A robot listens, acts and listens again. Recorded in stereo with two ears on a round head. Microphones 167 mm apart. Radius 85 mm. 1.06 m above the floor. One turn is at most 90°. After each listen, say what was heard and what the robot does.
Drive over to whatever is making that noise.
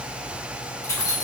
The keys jangling: about 15° left or 165° left. Turn 15° left.
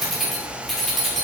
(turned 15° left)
Drive 1.0 m forward.
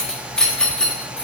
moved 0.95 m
Drive 1.0 m forward.
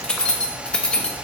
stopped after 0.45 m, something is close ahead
Arrived at the keys jangling, straight ahead.